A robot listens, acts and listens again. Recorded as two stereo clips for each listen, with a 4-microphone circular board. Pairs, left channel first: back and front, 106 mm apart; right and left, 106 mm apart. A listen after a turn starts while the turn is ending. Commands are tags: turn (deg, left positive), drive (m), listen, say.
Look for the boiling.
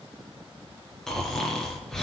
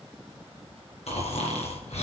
<listen/>
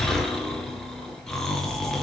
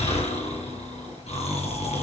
<listen/>
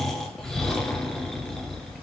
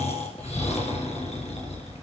<say>I can't make out boiling, only snoring.</say>